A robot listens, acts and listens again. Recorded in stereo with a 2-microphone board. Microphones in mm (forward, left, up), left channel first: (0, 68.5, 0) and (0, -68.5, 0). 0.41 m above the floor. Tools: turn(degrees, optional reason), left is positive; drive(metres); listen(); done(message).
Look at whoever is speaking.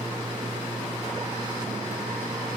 listen()
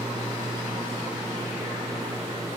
listen()
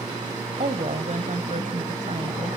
turn(degrees=-65, reason="The woman speaking: about 65° right or 115° right.")
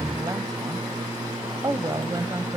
turn(degrees=-30, reason="So it is at 30° right.")
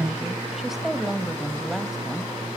done("Facing the woman speaking.")